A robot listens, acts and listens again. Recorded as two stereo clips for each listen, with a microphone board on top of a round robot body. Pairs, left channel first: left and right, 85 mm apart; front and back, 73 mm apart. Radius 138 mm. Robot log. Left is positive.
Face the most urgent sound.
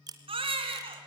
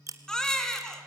note: The baby crying: 80° right.
cmd yaw -80
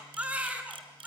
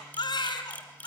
note: The baby crying is now 15° right.
cmd yaw -15
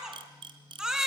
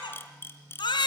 end: Facing the baby crying, 2 to 4 m away.